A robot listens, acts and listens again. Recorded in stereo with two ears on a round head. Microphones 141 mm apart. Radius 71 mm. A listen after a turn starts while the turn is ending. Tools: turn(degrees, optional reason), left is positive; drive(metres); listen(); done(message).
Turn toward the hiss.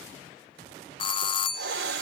turn(degrees=-75, reason="The hiss: about 75° right or 105° right.")
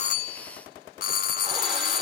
listen()
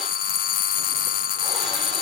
listen()
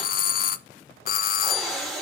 done("Found it: a hiss, straight ahead.")